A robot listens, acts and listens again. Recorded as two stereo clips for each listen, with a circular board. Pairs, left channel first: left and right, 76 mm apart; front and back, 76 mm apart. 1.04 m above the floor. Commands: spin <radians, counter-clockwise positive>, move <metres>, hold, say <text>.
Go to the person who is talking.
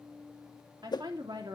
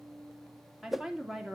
spin -1.66
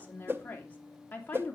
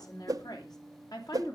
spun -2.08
spin 0.44
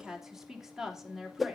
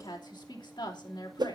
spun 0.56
spin -0.17
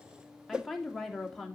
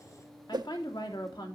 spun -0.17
move 1.0
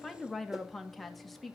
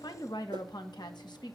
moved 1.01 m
move 1.0
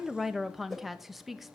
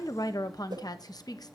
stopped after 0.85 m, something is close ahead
say I am next to the woman speaking.